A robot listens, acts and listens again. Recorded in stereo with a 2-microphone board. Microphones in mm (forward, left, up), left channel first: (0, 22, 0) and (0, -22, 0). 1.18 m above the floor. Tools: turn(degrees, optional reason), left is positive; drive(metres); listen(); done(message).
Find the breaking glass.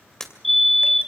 turn(degrees=30)
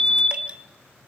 listen()
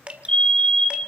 done("I heard breaking glass, but can't make it out now. It was about 15° right or 135° left.")